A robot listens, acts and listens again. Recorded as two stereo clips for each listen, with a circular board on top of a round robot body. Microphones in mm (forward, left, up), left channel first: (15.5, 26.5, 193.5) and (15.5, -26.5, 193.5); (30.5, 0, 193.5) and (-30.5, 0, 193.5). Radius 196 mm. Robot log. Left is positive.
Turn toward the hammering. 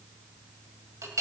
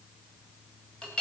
cmd idle
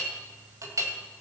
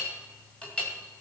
cmd idle
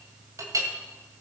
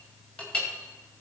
end: I can't make out hammering to turn to.